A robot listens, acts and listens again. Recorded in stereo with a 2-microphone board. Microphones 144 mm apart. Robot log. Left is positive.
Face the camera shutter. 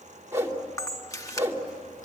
note: The camera shutter: about 25° left or 155° left.
cmd yaw +25
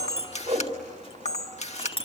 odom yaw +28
note: So it is at 130° left.
cmd yaw +130
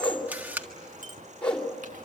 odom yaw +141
note: The camera shutter is now 10° right.
cmd yaw -10
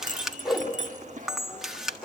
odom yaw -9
end: Found it: a camera shutter, straight ahead.